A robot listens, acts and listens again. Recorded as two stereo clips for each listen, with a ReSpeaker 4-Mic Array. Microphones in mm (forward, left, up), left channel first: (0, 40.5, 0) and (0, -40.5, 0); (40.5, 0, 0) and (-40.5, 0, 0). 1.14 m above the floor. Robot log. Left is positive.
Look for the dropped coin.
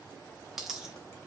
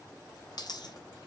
end: Found it: a dropped coin, straight ahead.